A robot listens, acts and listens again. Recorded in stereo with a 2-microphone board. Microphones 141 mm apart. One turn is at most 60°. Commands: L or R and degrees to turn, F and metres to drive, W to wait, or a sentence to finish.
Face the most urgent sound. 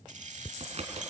W
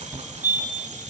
R30
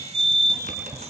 R60
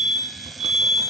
R60
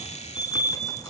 R10
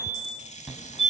Found it: a fire alarm, straight ahead, 2 to 4 m away.